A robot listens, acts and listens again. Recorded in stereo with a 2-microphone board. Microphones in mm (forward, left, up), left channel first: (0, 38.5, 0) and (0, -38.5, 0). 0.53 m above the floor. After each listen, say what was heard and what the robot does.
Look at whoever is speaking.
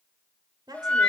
The woman speaking: about 65° right or 115° right. Turn 65° right.
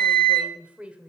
So it is at 15° right. Turn 15° right.
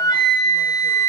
Keep listening.
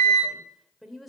Facing the woman speaking.